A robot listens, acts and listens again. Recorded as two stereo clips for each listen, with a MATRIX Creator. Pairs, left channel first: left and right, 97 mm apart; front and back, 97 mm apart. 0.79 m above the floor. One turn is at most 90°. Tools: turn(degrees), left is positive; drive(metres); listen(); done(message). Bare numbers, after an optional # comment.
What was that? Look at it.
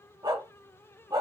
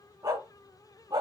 # The dog barking: 135° right.
turn(-90)
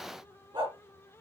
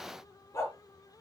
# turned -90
# The dog barking is now 55° right.
turn(-55)
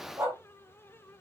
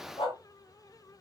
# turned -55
# The dog barking is now 25° right.
turn(-25)
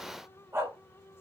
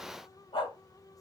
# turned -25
# The dog barking is now 25° right.
turn(-25)
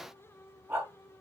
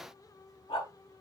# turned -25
# The dog barking is now 20° right.
turn(-20)
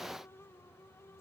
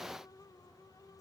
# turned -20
listen()
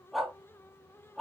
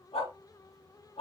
done("Found it: a dog barking, straight ahead, 2 to 4 m away.")